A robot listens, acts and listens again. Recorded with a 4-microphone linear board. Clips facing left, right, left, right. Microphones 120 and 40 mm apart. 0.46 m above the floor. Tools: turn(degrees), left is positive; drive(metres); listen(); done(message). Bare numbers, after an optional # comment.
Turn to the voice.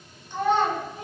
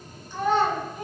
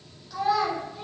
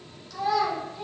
# The child speaking: about 20° left or 160° left.
turn(20)
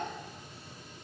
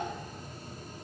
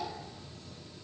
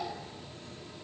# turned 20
listen()
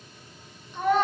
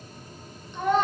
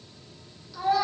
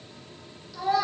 done("Facing the child speaking, 1 to 2 m away.")